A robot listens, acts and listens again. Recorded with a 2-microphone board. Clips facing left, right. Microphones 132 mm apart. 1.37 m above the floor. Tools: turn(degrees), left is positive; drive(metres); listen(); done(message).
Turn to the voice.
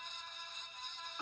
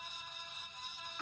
listen()
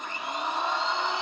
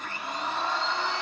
listen()
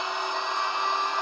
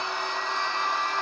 done("I can't make out anyone speaking, only a blender.")